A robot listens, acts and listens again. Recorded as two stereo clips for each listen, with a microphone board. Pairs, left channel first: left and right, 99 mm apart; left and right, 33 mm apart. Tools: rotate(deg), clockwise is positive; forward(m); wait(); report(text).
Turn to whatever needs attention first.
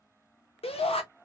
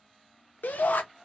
rotate(-70)
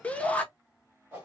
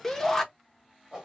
rotate(-15)
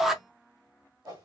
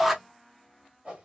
report("Facing the shout.")